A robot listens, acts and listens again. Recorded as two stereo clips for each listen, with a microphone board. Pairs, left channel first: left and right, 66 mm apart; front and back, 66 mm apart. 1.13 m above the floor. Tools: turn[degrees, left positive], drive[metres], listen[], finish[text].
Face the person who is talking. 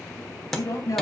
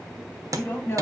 Thought: The woman speaking: 60° left.
Action: turn[60]
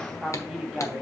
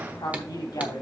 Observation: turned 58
Action: finish[Found it: a woman speaking, straight ahead.]